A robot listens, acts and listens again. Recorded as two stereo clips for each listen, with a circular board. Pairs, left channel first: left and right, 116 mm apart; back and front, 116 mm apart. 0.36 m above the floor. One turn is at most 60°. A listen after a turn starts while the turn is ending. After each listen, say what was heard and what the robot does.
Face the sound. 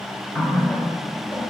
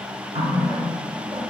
Found it: a running tap, straight ahead, 2 to 4 m away.